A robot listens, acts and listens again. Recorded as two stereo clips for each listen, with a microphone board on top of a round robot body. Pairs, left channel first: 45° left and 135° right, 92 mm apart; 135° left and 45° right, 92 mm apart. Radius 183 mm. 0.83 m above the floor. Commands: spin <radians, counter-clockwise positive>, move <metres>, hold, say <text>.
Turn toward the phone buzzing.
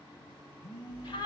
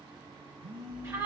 spin -0.52
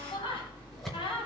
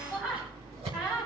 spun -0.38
hold
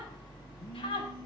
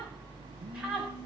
hold
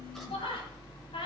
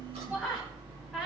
say Facing where the phone buzzing came from. I can't hear it now.